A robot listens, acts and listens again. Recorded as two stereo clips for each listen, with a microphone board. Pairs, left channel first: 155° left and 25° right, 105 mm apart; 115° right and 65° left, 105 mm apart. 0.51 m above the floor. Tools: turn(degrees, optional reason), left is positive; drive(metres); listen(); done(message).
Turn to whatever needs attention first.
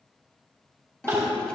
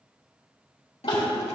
turn(degrees=-80, reason="The crying: 80° right.")
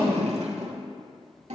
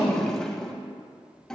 listen()
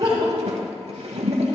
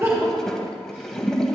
turn(degrees=15, reason="The crying is now 15° left.")
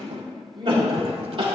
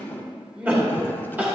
done("Found it: crying, straight ahead, 2 to 4 m away.")